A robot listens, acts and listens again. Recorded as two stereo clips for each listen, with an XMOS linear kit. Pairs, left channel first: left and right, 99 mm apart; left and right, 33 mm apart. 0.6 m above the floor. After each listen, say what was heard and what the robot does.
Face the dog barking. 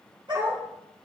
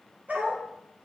The dog barking: about 55° right or 125° right. Turn 55° right.
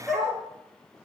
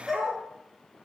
Facing the dog barking.